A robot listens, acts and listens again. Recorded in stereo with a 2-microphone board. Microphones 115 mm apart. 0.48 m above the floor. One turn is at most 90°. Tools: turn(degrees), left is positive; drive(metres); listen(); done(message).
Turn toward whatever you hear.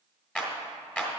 turn(degrees=30)
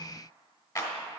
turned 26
turn(degrees=90)
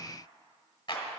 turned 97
turn(degrees=45)
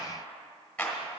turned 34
turn(degrees=10)
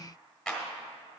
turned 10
done("Found it: a clap, straight ahead.")